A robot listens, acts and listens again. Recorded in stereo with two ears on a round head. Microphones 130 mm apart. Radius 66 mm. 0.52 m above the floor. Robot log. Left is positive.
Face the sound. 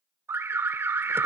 note: The alarm: about 15° right or 165° right.
cmd yaw -15
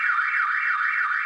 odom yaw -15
end: Facing the alarm.